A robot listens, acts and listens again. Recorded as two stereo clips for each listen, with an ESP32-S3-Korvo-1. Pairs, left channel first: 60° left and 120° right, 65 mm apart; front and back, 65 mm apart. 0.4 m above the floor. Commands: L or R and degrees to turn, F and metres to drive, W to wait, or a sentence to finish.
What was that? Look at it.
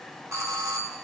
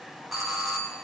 R90
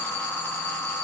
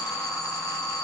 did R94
Found it: a doorbell, straight ahead, 2 to 4 m away.